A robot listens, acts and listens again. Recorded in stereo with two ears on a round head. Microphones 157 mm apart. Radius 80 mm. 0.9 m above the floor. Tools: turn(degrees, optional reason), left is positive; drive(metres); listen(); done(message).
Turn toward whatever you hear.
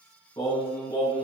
turn(degrees=20, reason="The singing: about 20° left or 160° left.")
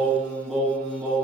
done("Found it: singing, straight ahead, over 4 m away.")